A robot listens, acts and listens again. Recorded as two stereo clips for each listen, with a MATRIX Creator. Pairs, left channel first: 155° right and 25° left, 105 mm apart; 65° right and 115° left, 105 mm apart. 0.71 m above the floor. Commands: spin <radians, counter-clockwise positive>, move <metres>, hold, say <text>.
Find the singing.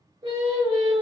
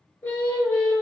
say Found it: singing, straight ahead.